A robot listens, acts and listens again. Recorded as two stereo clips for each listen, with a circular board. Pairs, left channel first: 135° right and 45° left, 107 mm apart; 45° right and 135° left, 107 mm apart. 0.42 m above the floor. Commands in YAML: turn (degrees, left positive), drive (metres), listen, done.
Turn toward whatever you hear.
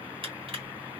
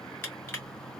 turn: 20
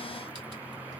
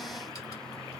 listen: true
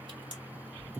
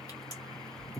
listen: true
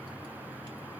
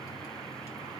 done: "Facing where the crushing came from. I can't hear it now."